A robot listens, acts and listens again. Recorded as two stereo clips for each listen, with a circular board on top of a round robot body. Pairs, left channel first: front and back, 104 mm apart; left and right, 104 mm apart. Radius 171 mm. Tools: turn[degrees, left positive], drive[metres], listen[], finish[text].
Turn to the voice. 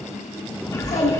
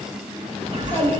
Thought: The child speaking: 20° left.
Action: turn[20]
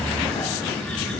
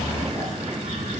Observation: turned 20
Action: listen[]
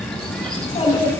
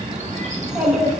Action: finish[Facing the child speaking.]